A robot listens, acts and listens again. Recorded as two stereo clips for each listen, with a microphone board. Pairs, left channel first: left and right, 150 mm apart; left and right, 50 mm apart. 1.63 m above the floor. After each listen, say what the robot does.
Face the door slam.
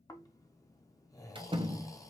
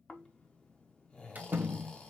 Turn 35° right.
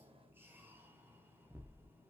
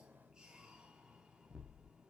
Keep listening.
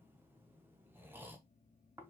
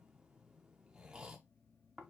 I heard a door slam, but can't make it out now. It was about straight ahead or 110° right.